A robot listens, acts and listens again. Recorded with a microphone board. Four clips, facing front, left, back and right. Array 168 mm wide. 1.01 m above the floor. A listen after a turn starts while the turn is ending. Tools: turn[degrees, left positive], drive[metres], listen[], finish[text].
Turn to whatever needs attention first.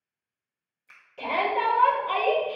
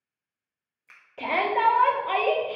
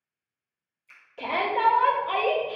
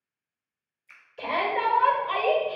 Thought: The shout: 90° left.
Action: turn[90]
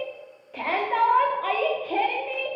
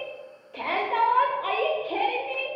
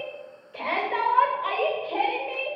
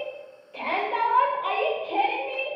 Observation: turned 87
Action: finish[Found it: a shout, straight ahead.]